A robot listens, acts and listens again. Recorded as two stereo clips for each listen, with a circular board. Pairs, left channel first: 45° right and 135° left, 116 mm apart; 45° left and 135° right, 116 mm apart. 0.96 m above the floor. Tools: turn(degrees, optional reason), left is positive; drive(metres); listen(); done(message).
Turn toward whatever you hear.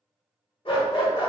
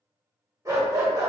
turn(degrees=-75, reason="The dog barking: 75° right.")
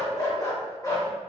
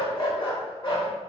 turn(degrees=10, reason="The dog barking is now 10° left.")
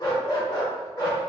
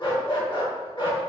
done("Facing the dog barking.")